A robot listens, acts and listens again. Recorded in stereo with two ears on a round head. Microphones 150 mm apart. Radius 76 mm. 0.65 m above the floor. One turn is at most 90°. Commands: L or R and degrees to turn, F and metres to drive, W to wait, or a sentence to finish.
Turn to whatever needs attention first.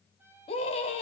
L35
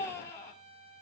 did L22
L15
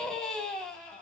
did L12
Facing the scream.